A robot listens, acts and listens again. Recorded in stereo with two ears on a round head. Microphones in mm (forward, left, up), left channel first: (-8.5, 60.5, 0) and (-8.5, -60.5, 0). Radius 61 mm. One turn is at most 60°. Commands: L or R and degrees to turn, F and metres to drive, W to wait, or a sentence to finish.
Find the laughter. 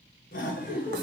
L60
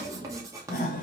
L60
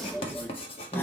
L15
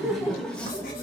L15
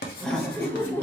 L15
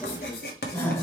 L15
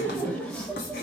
Facing the laughter, 1 to 2 m away.